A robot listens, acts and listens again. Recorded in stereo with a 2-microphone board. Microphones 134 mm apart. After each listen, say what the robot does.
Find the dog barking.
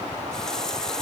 Keep listening.
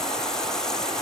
Keep listening.
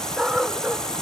Turn 30° right.
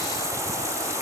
Keep listening.
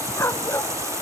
Turn 25° left.
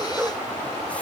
Turn 10° right.
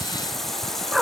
Found it: a dog barking, straight ahead.